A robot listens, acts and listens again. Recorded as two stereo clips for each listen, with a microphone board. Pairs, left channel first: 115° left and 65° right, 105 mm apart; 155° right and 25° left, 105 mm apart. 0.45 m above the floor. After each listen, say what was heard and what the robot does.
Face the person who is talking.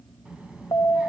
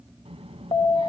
The child speaking: 10° left. Turn 10° left.
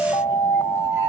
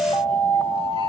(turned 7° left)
Keep listening.
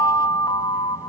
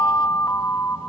Keep listening.
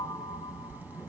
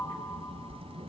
Facing the child speaking.